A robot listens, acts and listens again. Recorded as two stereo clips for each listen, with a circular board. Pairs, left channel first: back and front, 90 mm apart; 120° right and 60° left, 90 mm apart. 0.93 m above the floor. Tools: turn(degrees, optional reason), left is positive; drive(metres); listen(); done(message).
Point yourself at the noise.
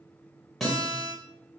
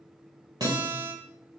turn(degrees=90, reason="The guitar: 90° left.")
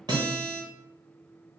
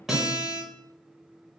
turn(degrees=-25, reason="The guitar is now 25° right.")
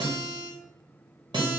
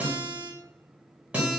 turn(degrees=-15, reason="The guitar is now 15° right.")
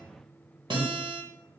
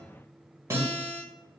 done("Found it: a guitar, straight ahead.")